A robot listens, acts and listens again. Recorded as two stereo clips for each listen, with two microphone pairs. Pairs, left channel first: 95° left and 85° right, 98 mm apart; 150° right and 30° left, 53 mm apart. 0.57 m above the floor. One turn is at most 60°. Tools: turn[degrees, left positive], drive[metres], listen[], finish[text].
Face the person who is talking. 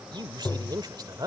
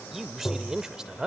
Thought: The man speaking: 40° right.
Action: turn[-40]
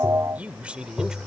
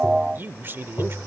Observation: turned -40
Action: finish[Facing the man speaking.]